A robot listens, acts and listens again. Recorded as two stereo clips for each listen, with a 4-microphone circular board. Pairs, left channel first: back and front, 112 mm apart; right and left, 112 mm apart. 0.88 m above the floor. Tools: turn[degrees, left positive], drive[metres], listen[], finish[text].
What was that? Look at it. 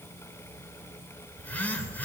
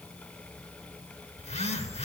Thought: The phone buzzing: 105° right.
Action: turn[-105]
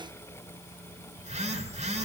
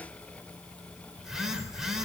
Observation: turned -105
Action: finish[Facing the phone buzzing.]